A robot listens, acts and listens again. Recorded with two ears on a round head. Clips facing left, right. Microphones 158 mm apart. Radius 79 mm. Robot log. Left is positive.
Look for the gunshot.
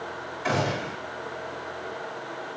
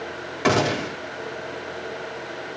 cmd yaw -90
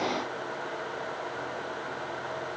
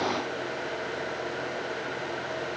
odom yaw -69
note: Nothing new. It was at 20° right.
cmd yaw -20
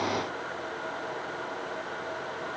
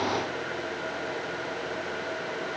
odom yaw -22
end: I heard a gunshot from this way, but can't make it out now.